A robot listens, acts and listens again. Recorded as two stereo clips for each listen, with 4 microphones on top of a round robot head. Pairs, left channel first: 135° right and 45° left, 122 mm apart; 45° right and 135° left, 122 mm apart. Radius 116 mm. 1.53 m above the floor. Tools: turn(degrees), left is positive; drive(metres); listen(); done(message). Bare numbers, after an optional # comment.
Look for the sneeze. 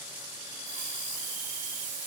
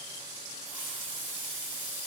listen()
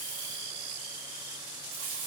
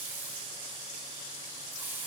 listen()
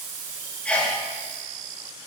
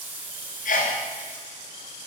# The sneeze: 55° right.
turn(-55)
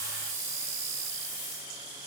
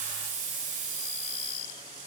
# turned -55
done("I heard a sneeze from this way, but can't make it out now.")